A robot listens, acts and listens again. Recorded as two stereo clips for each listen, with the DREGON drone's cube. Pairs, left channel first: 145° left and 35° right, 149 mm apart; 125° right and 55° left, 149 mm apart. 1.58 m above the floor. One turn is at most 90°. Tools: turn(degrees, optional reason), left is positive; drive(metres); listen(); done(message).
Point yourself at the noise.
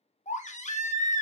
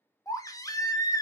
turn(degrees=90, reason="The baby crying: 170° left.")
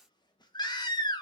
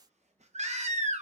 turn(degrees=90, reason="The baby crying is now 90° left.")
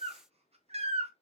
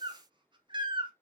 done("Found it: a baby crying, straight ahead.")